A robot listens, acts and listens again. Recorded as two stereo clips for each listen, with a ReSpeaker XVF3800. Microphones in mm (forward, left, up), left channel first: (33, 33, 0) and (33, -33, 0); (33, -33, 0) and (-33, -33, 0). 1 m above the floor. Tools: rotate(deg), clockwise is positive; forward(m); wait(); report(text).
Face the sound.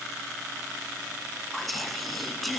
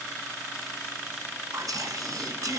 rotate(-180)
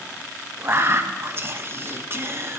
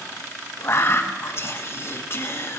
rotate(45)
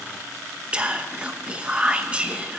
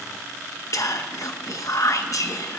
rotate(20)
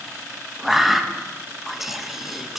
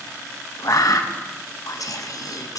report("Found it: whispering, straight ahead.")